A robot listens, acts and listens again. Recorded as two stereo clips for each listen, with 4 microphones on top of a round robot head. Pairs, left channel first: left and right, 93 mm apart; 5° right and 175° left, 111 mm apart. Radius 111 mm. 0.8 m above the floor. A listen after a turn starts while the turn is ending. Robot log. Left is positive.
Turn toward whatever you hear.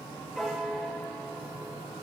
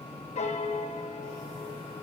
end: Found it: a piano, straight ahead.